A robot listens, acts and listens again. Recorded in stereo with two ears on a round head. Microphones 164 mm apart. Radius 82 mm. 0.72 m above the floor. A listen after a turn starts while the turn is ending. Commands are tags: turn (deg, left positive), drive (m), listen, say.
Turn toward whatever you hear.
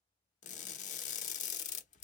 <turn deg="45"/>
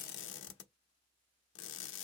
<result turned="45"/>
<turn deg="85"/>
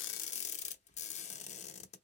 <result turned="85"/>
<turn deg="40"/>
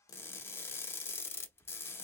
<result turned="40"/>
<turn deg="15"/>
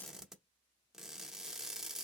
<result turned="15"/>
<say>Facing the crushing, under 1 m away.</say>